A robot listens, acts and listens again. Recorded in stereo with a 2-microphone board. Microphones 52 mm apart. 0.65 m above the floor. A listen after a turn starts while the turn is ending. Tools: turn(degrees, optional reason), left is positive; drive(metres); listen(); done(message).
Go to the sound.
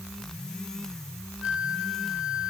turn(degrees=-25, reason="The flute: about 25° right or 155° right.")
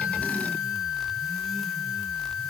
drive(metres=1.0)
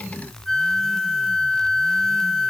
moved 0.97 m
drive(metres=1.0)
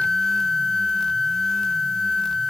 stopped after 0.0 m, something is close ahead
done("Arrived at the flute, straight ahead.")